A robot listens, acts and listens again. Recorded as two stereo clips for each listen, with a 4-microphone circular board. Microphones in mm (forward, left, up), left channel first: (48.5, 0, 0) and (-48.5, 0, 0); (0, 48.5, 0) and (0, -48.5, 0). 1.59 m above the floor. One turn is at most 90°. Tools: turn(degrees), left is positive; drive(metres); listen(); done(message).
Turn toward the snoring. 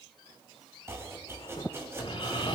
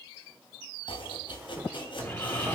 turn(degrees=25)
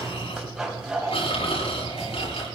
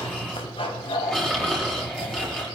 done("Facing the snoring.")